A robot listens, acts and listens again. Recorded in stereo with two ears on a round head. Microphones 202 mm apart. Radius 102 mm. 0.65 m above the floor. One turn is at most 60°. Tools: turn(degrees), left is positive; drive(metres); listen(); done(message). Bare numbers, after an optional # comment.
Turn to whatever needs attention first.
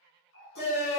# The shout: about 45° left or 135° left.
turn(45)
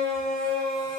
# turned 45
done("Found it: a shout, straight ahead.")